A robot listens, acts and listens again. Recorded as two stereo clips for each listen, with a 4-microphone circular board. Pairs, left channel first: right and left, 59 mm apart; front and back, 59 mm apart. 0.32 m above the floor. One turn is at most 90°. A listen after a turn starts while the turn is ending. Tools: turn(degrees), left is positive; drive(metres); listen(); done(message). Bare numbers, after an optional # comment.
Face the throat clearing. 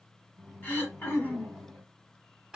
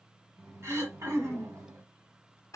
# The throat clearing: 145° right.
turn(-90)
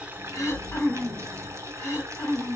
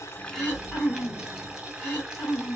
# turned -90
# The throat clearing is now 55° right.
turn(-55)
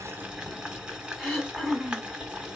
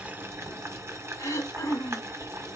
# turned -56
done("Found it: throat clearing, straight ahead, 1 to 2 m away.")